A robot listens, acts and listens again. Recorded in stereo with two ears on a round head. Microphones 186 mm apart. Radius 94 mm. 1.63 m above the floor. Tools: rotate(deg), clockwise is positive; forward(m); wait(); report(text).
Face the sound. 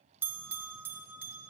rotate(30)
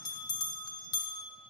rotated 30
rotate(-20)
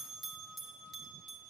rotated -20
report("Found it: a bell, straight ahead.")